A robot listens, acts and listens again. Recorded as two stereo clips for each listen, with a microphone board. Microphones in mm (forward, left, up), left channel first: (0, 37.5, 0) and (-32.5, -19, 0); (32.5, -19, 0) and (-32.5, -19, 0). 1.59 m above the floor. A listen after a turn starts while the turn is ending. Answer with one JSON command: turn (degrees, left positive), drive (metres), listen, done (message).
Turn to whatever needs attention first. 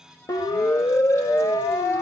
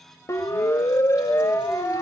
{"turn": 35}
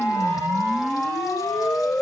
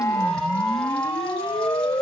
{"done": "Facing the siren."}